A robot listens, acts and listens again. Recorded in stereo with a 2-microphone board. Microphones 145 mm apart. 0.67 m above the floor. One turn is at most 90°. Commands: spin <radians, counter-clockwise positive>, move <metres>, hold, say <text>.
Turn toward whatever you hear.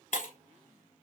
spin 1.05
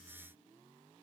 hold
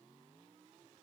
say I heard breaking glass, but can't make it out now. It was about straight ahead or 60° left.